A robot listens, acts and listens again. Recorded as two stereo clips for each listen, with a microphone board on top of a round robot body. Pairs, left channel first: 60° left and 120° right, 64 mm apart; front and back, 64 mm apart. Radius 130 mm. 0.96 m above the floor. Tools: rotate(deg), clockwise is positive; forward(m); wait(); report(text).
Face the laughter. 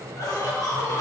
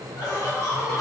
rotate(-35)
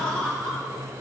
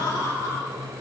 rotate(15)
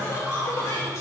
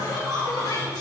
rotate(-15)
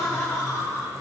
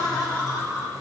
rotate(-10)
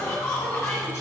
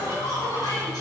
report("Found it: laughter, straight ahead, 2 to 4 m away.")